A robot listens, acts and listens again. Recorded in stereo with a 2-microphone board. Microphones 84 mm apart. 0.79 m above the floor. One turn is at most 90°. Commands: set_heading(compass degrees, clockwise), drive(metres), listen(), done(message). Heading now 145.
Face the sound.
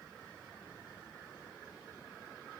listen()
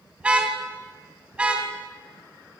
set_heading(175)
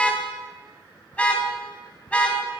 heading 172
set_heading(157)
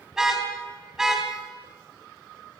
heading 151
done("Found it: a car horn, straight ahead.")